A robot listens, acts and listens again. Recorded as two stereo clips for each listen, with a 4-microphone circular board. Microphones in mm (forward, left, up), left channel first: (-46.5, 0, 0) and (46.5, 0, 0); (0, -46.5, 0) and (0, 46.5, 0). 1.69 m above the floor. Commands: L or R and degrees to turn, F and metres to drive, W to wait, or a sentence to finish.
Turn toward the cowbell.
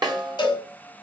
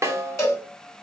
R145
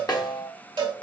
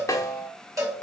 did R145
L40
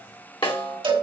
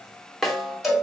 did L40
Found it: a cowbell, straight ahead.